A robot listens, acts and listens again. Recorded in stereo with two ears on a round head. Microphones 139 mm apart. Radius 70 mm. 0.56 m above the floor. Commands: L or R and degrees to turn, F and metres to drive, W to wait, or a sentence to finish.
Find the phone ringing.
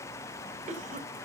W
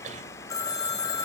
L25
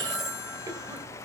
Found it: a phone ringing, straight ahead, 1 to 2 m away.